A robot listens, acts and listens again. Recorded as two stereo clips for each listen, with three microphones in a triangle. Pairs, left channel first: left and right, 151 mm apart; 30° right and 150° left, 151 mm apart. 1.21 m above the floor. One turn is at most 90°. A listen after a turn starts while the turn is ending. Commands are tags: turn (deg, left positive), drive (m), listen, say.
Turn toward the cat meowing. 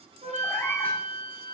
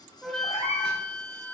<turn deg="15"/>
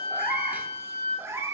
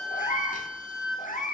<turn deg="-20"/>
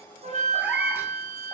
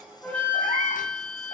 <listen/>
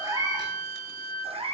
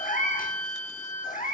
<turn deg="-45"/>
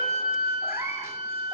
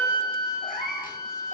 <turn deg="-20"/>
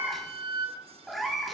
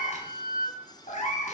<say>Facing the cat meowing.</say>